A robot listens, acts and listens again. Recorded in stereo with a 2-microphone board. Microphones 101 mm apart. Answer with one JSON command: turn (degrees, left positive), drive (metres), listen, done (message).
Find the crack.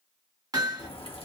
{"turn": 70}
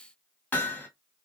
{"listen": true}
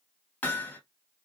{"done": "I heard a crack, but can't make it out now. It was about straight ahead or 40° left."}